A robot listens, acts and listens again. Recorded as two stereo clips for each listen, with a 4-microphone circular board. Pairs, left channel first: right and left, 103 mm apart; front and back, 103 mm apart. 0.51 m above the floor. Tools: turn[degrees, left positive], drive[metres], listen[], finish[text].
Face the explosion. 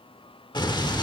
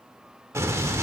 Thought: The explosion: 125° right.
Action: turn[-125]
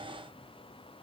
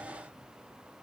Action: finish[I heard an explosion from this way, but can't make it out now.]